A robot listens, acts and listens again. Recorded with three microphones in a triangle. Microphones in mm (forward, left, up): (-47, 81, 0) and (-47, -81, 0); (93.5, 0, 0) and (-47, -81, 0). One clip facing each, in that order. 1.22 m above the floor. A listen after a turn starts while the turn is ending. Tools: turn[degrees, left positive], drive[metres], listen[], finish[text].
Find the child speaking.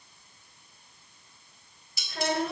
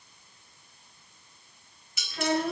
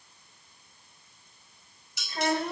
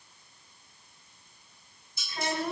Thought: The child speaking: 80° left.
Action: turn[80]
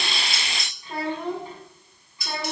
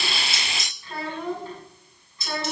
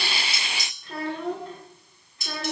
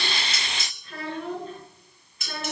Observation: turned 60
Thought: The child speaking is now 15° left.
Action: turn[15]
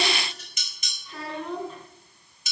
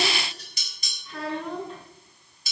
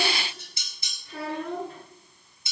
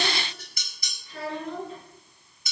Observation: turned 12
Action: finish[Found it: a child speaking, straight ahead, over 4 m away.]